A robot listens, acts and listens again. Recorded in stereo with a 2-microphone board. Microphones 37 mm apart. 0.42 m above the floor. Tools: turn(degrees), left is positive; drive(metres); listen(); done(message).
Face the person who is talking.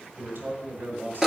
turn(degrees=-60)
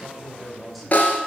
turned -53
done("Facing the man speaking.")